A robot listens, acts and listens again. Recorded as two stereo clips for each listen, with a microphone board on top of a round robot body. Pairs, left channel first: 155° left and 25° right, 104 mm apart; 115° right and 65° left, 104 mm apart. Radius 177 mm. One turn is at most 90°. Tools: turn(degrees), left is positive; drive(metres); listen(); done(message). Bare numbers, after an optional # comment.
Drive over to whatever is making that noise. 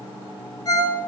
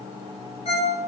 # The ringtone: 145° right.
turn(-90)
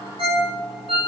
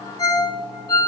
# The ringtone is now 55° right.
turn(-55)
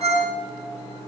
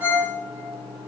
drive(1.0)
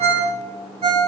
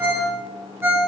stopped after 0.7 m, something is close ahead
done("Something is in my way. I am facing the ringtone but have not reached it.")